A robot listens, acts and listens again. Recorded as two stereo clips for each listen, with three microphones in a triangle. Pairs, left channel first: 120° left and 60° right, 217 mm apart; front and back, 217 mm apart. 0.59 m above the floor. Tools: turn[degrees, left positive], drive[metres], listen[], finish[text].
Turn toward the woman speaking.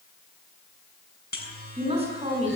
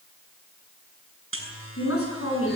Action: finish[Facing the woman speaking, over 4 m away.]